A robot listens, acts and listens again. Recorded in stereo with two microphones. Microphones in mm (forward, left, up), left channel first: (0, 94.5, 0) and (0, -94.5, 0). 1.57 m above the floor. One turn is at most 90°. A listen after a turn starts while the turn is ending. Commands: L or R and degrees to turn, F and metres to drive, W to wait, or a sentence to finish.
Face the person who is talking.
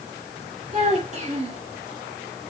R35
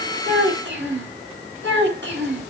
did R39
R90
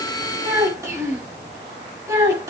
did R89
R15
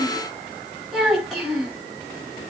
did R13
Found it: a child speaking, straight ahead, over 4 m away.